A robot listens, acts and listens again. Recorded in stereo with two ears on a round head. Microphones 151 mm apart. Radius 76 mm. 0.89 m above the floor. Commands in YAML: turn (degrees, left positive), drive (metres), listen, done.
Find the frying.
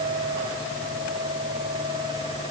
listen: true
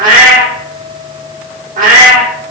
listen: true
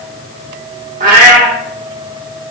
done: "I can't make out frying, only a cat meowing."